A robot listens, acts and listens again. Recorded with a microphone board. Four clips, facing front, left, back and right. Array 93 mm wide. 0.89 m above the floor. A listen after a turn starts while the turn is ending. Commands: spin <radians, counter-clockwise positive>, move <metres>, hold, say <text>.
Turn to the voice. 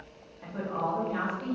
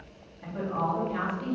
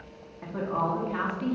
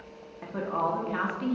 spin -1.92
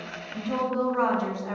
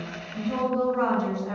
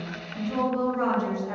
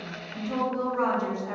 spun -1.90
say Found it: a woman speaking, straight ahead, 1 to 2 m away.